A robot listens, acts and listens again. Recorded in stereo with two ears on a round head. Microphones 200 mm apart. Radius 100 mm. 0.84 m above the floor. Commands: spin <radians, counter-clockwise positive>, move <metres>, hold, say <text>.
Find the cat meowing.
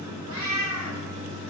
spin -1.22
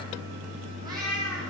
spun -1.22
spin -0.35
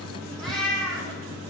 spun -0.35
say Found it: a cat meowing, straight ahead, 2 to 4 m away.